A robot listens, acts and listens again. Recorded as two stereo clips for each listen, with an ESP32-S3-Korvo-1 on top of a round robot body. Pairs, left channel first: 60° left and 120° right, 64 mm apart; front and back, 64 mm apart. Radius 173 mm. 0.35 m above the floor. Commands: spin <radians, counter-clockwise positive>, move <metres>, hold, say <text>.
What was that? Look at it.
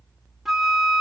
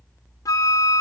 spin -0.61
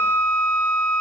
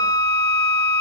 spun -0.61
say Found it: a flute, straight ahead, under 1 m away.